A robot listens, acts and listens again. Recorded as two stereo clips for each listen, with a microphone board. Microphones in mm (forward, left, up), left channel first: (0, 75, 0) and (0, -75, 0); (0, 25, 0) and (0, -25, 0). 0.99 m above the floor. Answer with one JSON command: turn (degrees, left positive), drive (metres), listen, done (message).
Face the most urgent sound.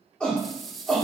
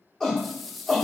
{"turn": 30}
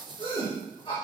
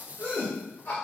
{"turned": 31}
{"turn": 140}
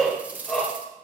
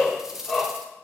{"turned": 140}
{"done": "Facing the shout, 2 to 4 m away."}